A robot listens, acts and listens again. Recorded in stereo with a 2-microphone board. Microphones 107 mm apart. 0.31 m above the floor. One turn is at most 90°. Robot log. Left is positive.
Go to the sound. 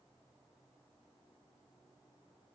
cmd idle
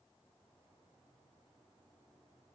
cmd idle
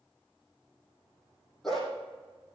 cmd yaw +30
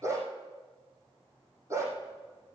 note: So it is at 30° right.
cmd yaw -30
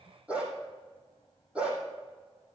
note: The dog barking is now 10° right.
cmd yaw -10
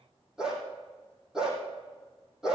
cmd fwd 1.0
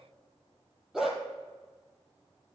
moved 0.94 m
cmd fwd 1.0
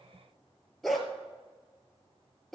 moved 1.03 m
cmd fwd 1.0
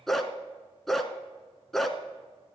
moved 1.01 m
cmd fwd 1.0
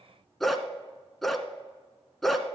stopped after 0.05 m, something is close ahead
end: I am next to the dog barking.